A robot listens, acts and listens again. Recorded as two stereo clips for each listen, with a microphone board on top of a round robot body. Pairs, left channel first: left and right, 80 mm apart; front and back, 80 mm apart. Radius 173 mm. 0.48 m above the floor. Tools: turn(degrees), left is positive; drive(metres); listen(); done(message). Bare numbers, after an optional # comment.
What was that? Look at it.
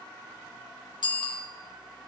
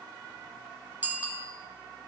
# The bicycle bell: 110° left.
turn(110)
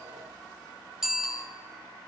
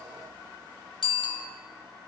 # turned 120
# The bicycle bell is now 10° right.
turn(-10)
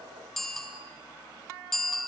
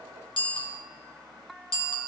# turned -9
done("Found it: a bicycle bell, straight ahead.")